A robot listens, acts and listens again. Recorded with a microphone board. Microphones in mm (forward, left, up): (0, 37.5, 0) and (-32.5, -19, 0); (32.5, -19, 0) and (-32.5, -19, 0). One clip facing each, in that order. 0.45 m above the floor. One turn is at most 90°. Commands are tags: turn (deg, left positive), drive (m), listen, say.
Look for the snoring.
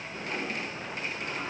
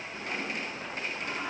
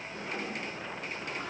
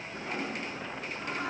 <listen/>
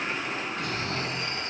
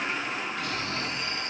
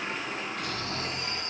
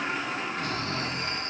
<turn deg="90"/>
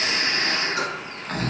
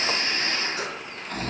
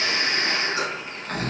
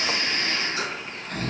<turn deg="35"/>
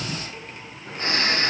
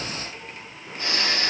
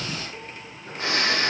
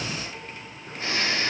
<turn deg="10"/>
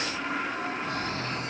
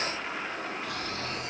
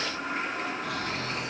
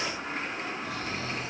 <say>Facing the snoring, 2 to 4 m away.</say>